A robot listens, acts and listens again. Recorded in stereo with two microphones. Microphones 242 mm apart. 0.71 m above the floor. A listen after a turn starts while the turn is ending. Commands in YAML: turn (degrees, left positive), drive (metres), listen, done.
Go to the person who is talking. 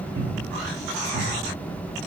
listen: true
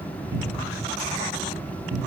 listen: true
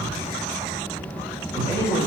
turn: -15
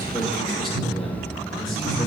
drive: 1.0
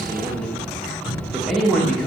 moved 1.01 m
drive: 1.0
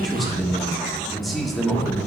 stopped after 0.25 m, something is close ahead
done: "I am next to the man speaking."